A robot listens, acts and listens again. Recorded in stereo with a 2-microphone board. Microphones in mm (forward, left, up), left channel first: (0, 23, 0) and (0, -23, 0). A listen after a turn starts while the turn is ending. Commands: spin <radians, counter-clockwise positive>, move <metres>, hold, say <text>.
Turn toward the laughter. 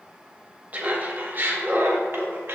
spin -0.96
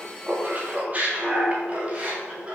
spin -0.44
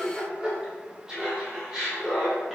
spin -0.17
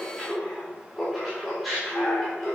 say Found it: laughter, straight ahead, 2 to 4 m away.